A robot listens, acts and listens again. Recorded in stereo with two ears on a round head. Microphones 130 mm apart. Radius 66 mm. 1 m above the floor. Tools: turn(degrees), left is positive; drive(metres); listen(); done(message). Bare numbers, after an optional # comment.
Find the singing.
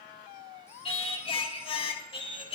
# The singing: about 40° left or 140° left.
turn(40)
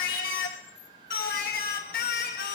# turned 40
# So it is at 100° left.
turn(100)
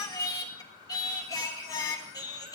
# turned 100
# The singing is now 25° left.
turn(25)
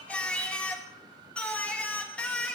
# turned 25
# The singing is now 10° left.
turn(10)
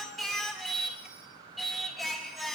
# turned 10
done("Facing the singing, 1 to 2 m away.")